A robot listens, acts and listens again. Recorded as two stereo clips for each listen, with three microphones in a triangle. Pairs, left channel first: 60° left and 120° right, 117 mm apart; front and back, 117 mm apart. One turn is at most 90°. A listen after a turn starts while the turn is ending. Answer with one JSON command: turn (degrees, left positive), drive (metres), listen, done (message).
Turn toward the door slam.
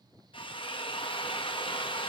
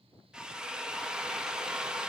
{"listen": true}
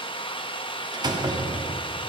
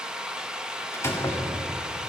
{"turn": -65}
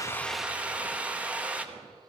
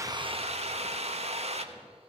{"done": "Facing where the door slam came from. I can't hear it now."}